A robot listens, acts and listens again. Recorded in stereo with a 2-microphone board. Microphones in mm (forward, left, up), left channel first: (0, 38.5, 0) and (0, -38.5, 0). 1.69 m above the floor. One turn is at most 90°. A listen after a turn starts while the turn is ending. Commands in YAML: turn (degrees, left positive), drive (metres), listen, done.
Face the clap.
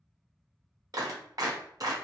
turn: -50
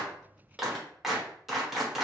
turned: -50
done: "Found it: a clap, straight ahead."